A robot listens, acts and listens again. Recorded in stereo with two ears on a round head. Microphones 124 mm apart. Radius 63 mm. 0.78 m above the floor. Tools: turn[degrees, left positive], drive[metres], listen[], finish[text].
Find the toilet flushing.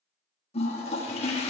Thought: The toilet flushing: about 45° left or 135° left.
Action: turn[45]
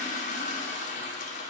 Thought: So it is at 80° left.
Action: turn[80]
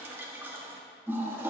Thought: The toilet flushing is now 20° right.
Action: turn[-20]
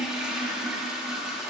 Action: finish[Facing the toilet flushing, 1 to 2 m away.]